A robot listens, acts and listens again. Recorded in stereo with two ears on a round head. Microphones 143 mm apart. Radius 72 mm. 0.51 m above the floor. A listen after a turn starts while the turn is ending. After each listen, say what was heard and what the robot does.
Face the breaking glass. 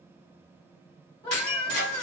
The breaking glass: about 70° left or 110° left. Turn 70° left.
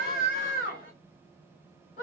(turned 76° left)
Keep listening.
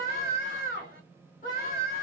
I heard breaking glass, but can't make it out now. It was about 5° right or 35° left.